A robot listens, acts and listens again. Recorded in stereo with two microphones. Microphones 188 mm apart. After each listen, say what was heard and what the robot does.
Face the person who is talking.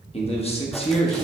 The man speaking: about 30° left or 150° left. Turn 30° left.
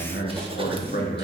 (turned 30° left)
So it is at 115° left. Turn 115° left.
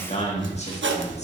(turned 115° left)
The man speaking is now 40° left. Turn 40° left.
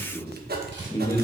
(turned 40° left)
The man speaking is now 20° left. Turn 20° left.
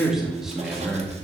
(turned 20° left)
Found it: a man speaking, straight ahead, 1 to 2 m away.